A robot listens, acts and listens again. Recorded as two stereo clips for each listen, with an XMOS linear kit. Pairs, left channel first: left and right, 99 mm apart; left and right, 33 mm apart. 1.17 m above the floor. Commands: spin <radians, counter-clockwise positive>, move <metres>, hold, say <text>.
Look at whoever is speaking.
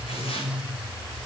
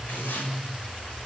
hold
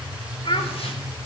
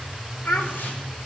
spin 1.31
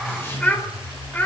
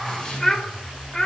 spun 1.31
spin 0.35
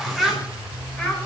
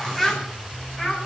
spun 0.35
say Facing the child speaking.